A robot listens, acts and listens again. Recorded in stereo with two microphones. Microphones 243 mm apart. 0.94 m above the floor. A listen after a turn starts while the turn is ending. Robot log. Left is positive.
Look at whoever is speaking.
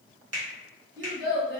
note: The child speaking: about 50° right or 130° right.
cmd yaw -50
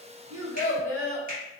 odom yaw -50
note: So it is at 75° right.
cmd yaw -75
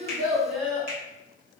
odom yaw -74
end: Found it: a child speaking, straight ahead.